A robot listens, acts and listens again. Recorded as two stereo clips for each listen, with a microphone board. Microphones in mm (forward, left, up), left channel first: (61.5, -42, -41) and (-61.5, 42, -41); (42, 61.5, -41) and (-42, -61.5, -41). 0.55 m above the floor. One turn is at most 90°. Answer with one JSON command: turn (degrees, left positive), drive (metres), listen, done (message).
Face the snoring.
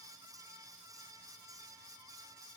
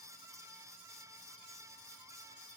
{"listen": true}
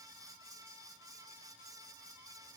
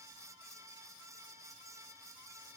{"listen": true}
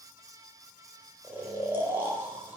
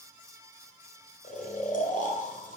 {"turn": 70}
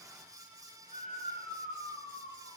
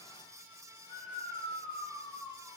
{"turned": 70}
{"turn": -15}
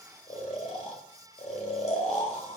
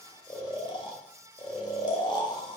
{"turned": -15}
{"done": "Facing the snoring."}